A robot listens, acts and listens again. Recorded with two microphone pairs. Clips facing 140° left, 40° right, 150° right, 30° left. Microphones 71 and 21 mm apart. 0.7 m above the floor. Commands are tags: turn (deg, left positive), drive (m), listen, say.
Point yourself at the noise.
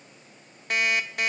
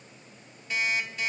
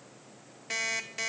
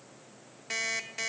<turn deg="130"/>
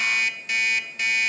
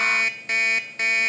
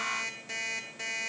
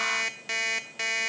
<say>Facing the alarm clock.</say>